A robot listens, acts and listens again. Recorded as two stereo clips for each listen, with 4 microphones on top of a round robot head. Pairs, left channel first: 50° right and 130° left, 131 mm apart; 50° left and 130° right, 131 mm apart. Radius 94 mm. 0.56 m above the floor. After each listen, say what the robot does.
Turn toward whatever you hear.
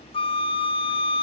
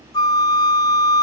Found it: a flute, straight ahead, 1 to 2 m away.